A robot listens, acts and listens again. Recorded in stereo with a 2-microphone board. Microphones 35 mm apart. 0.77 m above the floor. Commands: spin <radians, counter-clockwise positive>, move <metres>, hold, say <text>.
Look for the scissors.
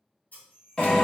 spin 0.96
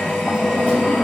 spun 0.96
hold
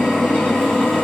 hold
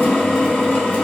say I heard scissors, but can't make it out now. It was about straight ahead or 70° left.